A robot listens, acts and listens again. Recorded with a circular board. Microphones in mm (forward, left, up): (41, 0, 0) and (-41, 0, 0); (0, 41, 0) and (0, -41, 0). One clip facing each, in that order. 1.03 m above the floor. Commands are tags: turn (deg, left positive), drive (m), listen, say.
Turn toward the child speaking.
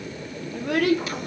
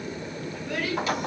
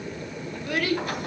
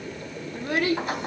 <turn deg="-25"/>
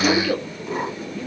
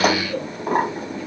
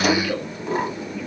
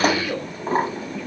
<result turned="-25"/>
<say>Found it: a child speaking, straight ahead.</say>